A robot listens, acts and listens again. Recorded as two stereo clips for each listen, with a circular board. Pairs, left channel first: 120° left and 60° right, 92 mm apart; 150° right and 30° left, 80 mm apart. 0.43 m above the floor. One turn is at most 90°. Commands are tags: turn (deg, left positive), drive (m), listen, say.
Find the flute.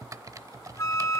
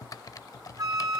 <turn deg="65"/>
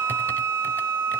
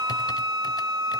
<say>Facing the flute.</say>